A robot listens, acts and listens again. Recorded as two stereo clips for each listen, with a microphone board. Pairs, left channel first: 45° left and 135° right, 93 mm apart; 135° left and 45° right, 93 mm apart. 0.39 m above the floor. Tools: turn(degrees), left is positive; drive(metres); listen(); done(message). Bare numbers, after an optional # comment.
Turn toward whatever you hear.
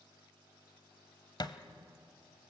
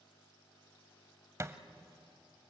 # The thud: 10° left.
turn(10)
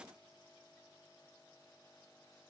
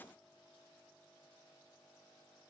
done("I heard a thud from this way, but can't make it out now.")